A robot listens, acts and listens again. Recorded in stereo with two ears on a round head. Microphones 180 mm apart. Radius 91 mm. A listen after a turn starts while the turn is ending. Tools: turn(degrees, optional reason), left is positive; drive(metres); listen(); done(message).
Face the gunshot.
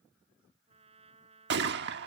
turn(degrees=-60, reason="The gunshot: about 60° right or 120° right.")
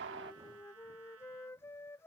listen()
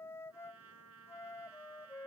done("I heard a gunshot, but can't make it out now. It was about straight ahead or 60° right.")